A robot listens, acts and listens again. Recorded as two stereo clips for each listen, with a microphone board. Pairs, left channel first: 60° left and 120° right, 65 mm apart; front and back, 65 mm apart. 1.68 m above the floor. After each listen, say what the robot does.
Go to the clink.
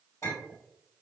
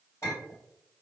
Turn 35° left.
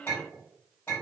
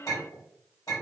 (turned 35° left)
Drive 1.0 m forward.
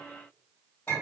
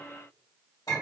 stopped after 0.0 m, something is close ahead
Something is in my way. I am facing the clink but have not reached it.